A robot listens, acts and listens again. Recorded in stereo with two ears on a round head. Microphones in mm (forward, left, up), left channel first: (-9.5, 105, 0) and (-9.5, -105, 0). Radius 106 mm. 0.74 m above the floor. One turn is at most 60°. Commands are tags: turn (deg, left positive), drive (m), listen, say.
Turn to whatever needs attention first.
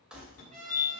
<turn deg="55"/>
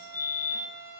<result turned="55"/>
<turn deg="60"/>
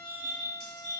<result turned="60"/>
<say>Found it: a fire alarm, straight ahead, 2 to 4 m away.</say>